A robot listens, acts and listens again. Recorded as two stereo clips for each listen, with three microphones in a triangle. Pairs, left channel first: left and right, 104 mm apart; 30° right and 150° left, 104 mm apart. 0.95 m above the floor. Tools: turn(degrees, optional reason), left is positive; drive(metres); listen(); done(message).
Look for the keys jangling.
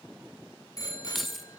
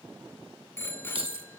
turn(degrees=180, reason="The keys jangling: straight behind.")
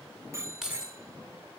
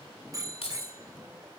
done("Facing the keys jangling.")